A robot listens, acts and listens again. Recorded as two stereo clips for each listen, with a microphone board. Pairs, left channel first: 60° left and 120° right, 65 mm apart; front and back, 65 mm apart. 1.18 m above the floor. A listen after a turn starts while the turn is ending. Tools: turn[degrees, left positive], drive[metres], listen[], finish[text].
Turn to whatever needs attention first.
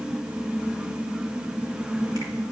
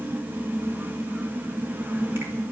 Action: listen[]
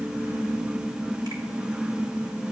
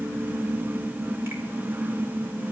Action: listen[]
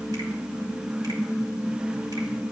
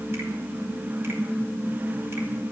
Action: finish[I can't make out anything urgent.]